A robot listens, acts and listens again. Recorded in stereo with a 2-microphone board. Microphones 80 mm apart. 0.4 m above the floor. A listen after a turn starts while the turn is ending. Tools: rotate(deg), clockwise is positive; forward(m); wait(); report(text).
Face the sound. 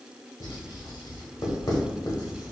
rotate(-50)
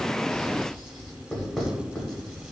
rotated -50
report("Found it: writing, straight ahead, under 1 m away.")